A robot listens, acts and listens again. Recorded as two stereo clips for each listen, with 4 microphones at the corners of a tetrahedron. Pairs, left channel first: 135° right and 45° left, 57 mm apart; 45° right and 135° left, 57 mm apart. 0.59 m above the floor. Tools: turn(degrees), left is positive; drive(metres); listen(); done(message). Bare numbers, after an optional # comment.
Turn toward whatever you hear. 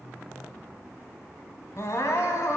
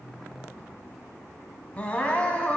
# The crying: 110° right.
turn(-110)
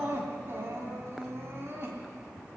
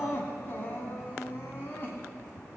done("Facing the crying.")